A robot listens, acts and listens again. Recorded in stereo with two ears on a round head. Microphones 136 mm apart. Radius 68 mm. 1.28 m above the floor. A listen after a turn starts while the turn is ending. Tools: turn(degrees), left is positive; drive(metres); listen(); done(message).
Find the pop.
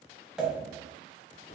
turn(degrees=-30)
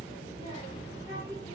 listen()
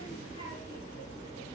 done("I heard a pop, but can't make it out now. It was about 25° left or 145° right.")